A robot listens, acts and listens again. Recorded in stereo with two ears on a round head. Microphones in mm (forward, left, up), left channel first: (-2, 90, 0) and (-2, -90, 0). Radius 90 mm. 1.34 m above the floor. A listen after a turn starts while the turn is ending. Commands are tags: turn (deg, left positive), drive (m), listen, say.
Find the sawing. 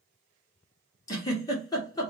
<listen/>
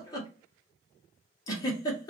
<listen/>
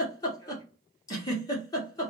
<say>I can't make out sawing to turn to.</say>